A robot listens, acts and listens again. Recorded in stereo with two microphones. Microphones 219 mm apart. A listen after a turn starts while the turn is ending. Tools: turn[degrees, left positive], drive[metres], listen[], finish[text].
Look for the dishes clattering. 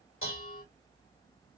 Thought: The dishes clattering: about 70° left or 110° left.
Action: turn[70]
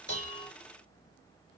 Action: listen[]
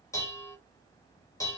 Thought: So it is at 15° left.
Action: turn[15]
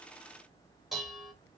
Action: finish[Found it: dishes clattering, straight ahead, 1 to 2 m away.]